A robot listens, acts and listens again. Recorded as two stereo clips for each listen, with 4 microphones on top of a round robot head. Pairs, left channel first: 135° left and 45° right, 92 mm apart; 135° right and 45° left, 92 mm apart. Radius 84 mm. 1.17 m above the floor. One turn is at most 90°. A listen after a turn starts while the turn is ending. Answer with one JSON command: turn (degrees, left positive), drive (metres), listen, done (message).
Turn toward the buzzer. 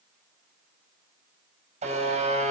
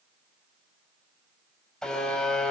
{"turn": -50}
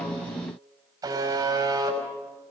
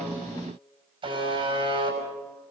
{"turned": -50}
{"turn": 10}
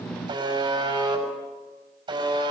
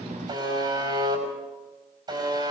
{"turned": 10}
{"done": "Facing the buzzer."}